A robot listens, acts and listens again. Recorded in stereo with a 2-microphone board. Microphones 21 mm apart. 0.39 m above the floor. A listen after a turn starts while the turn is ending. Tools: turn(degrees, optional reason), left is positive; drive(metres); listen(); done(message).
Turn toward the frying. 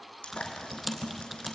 turn(degrees=90)
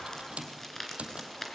listen()
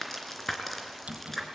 done("Facing the frying.")